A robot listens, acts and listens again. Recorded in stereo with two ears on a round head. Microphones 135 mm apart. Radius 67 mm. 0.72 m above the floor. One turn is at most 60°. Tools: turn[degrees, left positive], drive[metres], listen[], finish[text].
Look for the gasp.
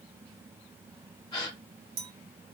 Thought: The gasp: about 30° left or 150° left.
Action: turn[30]
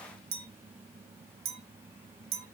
Action: listen[]
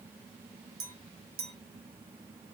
Action: finish[I heard a gasp, but can't make it out now. It was about straight ahead or 120° left.]